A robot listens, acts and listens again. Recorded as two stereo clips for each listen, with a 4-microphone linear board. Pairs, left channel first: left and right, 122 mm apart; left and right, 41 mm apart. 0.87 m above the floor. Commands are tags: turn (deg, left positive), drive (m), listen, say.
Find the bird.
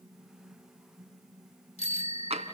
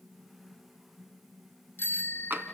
<listen/>
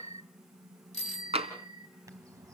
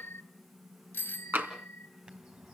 <turn deg="-30"/>
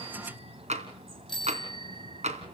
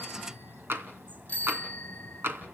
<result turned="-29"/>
<turn deg="-125"/>
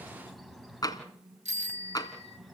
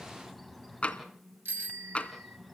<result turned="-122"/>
<say>Found it: a bird, straight ahead.</say>